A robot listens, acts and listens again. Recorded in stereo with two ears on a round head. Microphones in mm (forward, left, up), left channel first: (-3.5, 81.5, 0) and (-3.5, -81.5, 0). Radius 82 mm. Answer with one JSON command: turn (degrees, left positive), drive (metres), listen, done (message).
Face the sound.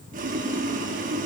{"turn": -45}
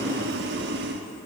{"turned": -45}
{"turn": -80}
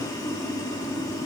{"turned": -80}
{"turn": 20}
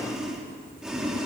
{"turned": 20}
{"done": "Found it: boiling, straight ahead."}